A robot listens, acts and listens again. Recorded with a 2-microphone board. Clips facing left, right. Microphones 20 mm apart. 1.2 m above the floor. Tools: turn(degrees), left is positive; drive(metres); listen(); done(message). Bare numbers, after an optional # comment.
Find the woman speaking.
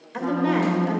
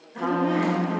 turn(90)
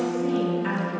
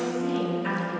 # So it is at 10° left.
turn(10)
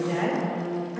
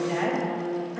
done("Found it: a woman speaking, straight ahead.")